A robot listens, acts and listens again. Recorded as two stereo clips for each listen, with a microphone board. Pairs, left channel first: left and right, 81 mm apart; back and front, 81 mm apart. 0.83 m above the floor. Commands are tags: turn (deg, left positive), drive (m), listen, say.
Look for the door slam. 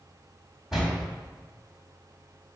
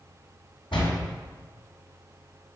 <turn deg="-175"/>
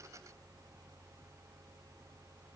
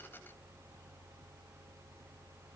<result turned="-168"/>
<say>Facing where the door slam came from. I can't hear it now.</say>